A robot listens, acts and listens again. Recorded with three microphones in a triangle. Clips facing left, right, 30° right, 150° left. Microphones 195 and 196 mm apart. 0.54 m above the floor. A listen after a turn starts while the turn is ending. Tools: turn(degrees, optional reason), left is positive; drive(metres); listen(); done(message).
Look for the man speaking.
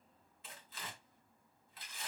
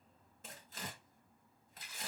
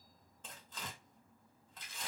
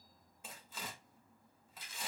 listen()
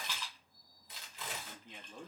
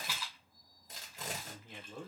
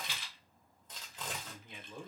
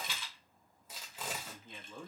turn(degrees=-105, reason="The man speaking: 105° right.")
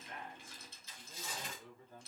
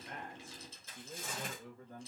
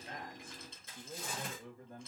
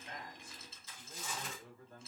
turn(degrees=-60, reason="The man speaking is now 60° right.")
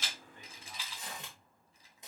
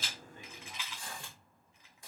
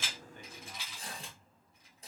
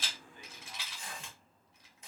listen()
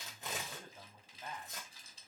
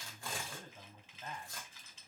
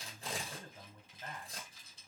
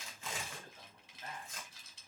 turn(degrees=10, reason="The man speaking is now 10° left.")
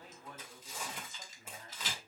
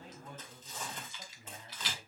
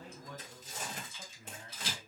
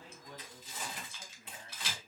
done("Found it: a man speaking, straight ahead.")